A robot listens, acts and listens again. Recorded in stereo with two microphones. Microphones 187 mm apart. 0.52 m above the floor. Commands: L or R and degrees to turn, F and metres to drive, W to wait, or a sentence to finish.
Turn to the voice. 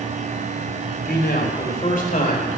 L45
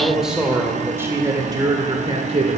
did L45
R40
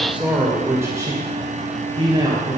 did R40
R25
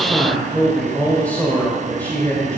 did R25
L10
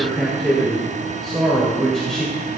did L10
Facing the man speaking, 2 to 4 m away.